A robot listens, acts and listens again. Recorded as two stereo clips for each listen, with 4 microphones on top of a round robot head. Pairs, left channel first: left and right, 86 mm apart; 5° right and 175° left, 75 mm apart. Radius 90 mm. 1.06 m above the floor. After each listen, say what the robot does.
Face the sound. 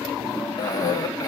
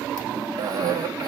Turn 140° left.
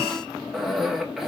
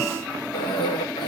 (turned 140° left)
Facing the cough, 1 to 2 m away.